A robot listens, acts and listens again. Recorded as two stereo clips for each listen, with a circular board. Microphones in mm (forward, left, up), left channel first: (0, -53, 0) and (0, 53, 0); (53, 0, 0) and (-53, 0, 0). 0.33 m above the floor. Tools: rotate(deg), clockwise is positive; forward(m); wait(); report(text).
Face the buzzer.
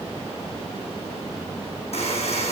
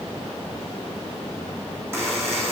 rotate(115)
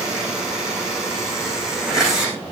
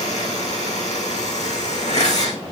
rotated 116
report("Facing the buzzer.")